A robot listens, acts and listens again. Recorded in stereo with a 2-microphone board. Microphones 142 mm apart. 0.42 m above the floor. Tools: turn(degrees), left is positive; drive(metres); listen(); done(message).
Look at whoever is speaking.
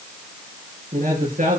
turn(degrees=-70)
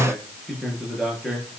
done("Facing the man speaking.")